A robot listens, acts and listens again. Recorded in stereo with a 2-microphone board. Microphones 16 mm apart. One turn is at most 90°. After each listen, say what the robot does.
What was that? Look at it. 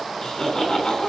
Turn 50° left.
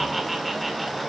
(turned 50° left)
Found it: laughter, straight ahead.